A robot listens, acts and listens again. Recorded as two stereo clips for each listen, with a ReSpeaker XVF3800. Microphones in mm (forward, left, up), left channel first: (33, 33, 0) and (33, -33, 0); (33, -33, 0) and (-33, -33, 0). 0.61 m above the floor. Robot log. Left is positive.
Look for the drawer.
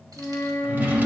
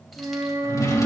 note: The drawer: 30° right.
cmd yaw -30
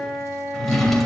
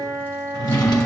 end: Found it: a drawer, straight ahead.